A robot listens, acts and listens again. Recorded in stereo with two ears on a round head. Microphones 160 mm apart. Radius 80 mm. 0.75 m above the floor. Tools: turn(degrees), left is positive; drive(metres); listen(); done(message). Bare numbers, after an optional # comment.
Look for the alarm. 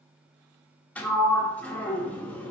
listen()
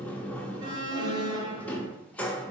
# The alarm: about 25° right or 155° right.
turn(-25)
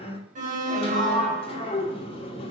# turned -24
# So it is at 125° right.
turn(-125)
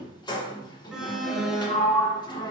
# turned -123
done("Facing the alarm, 1 to 2 m away.")